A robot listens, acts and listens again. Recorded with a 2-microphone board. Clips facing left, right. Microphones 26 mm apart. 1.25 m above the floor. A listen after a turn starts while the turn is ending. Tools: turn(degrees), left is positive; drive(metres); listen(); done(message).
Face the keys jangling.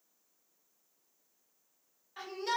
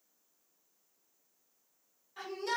listen()
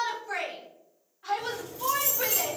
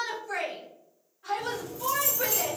turn(degrees=60)
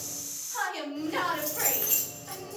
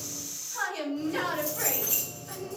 turn(degrees=55)
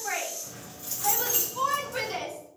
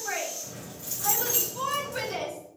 done("Found it: keys jangling, straight ahead, 1 to 2 m away.")